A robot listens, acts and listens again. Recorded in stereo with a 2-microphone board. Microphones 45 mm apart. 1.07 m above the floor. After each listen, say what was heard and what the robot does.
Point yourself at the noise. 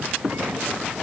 Keep listening.
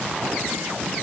Keep listening.
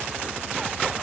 I can't make out anything.